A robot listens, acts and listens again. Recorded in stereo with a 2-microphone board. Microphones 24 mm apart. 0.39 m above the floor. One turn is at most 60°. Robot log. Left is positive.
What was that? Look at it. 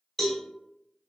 cmd yaw +30
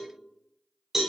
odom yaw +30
note: So it is at 20° right.
cmd yaw -20
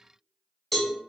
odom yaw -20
end: Found it: a cowbell, straight ahead.